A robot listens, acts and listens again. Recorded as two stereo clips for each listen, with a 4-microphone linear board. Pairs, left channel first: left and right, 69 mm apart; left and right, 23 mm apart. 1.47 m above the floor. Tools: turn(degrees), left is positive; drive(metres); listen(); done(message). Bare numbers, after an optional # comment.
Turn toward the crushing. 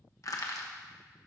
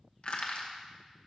# The crushing: about 55° left or 125° left.
turn(55)
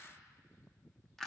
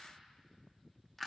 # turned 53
done("Found it: crushing, straight ahead.")